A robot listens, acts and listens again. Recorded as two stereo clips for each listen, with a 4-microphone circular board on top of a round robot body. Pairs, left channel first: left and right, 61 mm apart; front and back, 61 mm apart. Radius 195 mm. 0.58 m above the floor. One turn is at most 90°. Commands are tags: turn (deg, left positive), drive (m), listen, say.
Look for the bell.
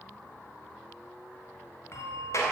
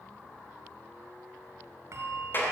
<turn deg="90"/>
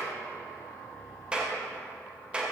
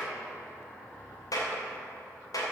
<turn deg="50"/>
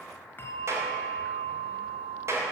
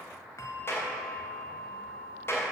<turn deg="35"/>
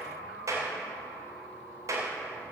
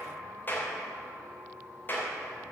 <listen/>
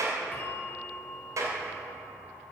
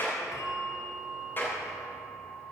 <turn deg="25"/>
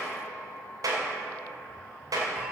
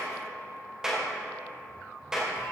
<listen/>
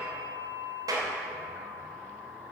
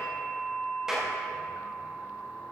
<turn deg="-15"/>
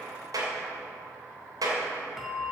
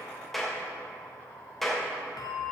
<say>Found it: a bell, straight ahead.</say>